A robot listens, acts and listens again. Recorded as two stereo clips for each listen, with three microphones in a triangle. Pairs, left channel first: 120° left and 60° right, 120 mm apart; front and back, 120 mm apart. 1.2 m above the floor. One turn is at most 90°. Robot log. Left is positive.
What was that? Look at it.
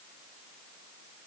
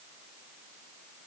cmd idle
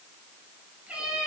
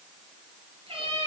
note: The cat meowing: 140° right.
cmd yaw -90
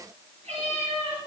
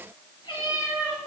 note: The cat meowing is now 50° right.
cmd yaw -50
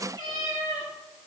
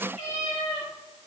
end: Facing the cat meowing.